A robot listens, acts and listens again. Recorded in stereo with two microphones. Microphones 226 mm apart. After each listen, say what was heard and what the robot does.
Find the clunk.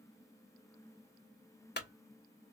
The clunk: about 50° left or 130° left. Turn 50° left.
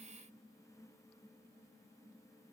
Keep listening.
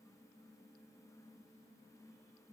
I heard a clunk, but can't make it out now. It was about straight ahead or 80° left.